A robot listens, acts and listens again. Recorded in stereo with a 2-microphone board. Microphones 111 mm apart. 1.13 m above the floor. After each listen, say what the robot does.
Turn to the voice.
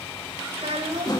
Turn 60° right.
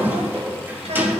Keep listening.
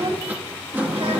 Turn 70° right.
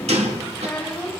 Turn 10° left.
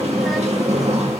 Keep listening.
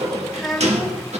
Found it: a child speaking, straight ahead, over 4 m away.